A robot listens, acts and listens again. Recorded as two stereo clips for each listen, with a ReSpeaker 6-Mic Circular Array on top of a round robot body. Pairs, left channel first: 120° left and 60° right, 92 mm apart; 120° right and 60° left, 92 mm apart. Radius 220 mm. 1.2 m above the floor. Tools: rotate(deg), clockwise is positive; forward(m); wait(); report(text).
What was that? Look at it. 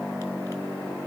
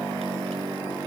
wait()
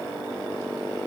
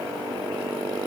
wait()
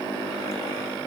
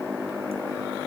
report("I can't make out anything to turn to.")